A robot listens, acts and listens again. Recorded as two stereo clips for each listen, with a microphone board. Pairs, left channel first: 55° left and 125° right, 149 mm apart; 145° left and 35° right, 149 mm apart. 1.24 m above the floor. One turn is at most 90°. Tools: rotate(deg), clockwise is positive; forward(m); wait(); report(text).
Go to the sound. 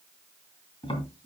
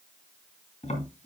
rotate(-90)
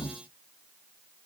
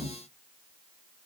rotate(10)
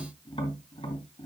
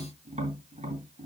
forward(1.0)
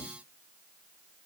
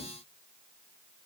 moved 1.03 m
wait()
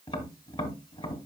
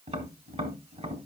forward(1.0)
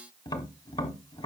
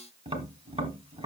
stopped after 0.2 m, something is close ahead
report("I am next to the tapping.")